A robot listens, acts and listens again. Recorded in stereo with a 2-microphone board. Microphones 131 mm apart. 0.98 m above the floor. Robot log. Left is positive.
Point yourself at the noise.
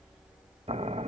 note: The boiling: about 55° right or 125° right.
cmd yaw -55
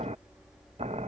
note: So it is at 65° right.
cmd yaw -65
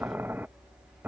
note: The boiling is now 15° right.
cmd yaw -15
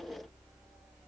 cmd idle
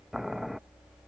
end: Found it: boiling, straight ahead.